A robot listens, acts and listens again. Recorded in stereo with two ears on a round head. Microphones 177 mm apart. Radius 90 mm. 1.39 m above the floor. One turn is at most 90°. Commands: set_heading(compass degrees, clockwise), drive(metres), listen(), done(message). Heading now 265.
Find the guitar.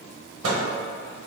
listen()
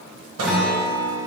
set_heading(235)
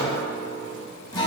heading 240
set_heading(150)
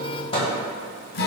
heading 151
set_heading(86)
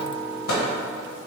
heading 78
set_heading(88)
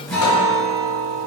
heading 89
done("Found it: a guitar, straight ahead, under 1 m away.")